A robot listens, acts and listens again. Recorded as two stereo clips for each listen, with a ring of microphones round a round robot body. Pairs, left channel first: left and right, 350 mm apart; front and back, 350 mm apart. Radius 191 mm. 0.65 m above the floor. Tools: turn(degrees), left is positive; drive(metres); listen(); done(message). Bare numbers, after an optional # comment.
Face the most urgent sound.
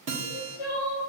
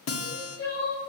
# The crying: 70° left.
turn(70)
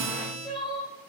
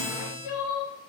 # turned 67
done("Facing the crying, 2 to 4 m away.")